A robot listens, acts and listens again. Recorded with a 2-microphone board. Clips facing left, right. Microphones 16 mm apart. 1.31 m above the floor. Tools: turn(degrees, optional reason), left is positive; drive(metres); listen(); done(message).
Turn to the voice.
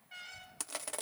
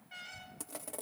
turn(degrees=70, reason="The child speaking: about 70° left or 110° left.")
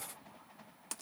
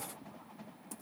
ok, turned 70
listen()
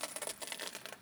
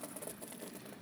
done("Facing the child speaking.")